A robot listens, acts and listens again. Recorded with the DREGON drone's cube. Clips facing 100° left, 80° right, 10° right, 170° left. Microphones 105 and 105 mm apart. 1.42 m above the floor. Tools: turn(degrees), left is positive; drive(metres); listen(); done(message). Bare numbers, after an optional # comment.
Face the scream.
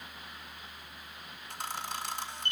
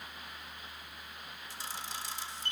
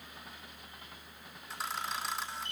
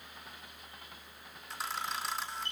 listen()
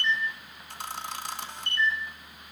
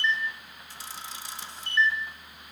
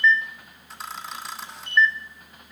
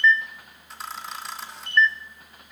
listen()
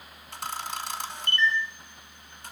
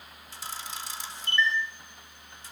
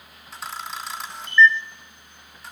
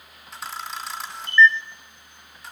done("I can't make out a scream to turn to.")